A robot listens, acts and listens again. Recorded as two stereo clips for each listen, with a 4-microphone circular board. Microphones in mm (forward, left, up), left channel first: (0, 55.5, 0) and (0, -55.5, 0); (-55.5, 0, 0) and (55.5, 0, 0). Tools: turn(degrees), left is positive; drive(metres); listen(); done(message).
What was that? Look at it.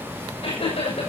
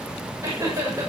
turn(degrees=60)
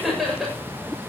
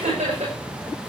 done("Facing the laughter.")